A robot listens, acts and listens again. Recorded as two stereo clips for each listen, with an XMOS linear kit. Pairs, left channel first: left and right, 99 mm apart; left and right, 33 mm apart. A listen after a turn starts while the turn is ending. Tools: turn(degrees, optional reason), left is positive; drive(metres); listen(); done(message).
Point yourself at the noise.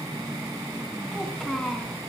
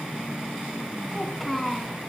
turn(degrees=30)
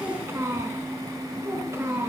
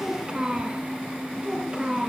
turn(degrees=-25, reason="So it is at 25° right.")
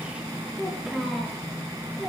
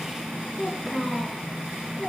done("Facing the child speaking, over 4 m away.")